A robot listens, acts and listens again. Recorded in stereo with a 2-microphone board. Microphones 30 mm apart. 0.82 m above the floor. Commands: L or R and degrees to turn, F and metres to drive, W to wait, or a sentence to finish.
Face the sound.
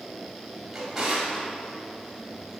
R30
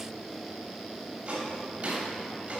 R140
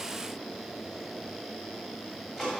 R15
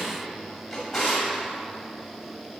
Found it: a drawer, straight ahead.